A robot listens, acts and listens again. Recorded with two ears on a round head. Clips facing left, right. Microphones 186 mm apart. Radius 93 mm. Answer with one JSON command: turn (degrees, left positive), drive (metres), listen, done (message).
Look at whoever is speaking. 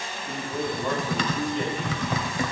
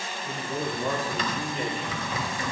{"turn": -30}
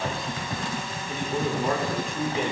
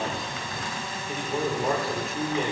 {"turn": 30}
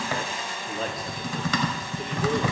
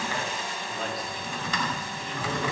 {"turn": 135}
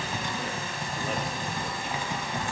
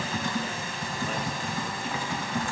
{"listen": true}
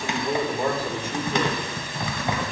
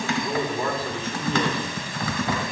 {"turn": 15}
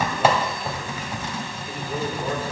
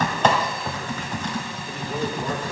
{"listen": true}
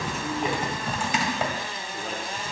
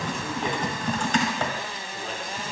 {"listen": true}
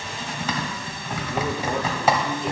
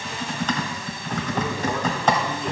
{"done": "Facing where the man speaking came from. I can't hear it now."}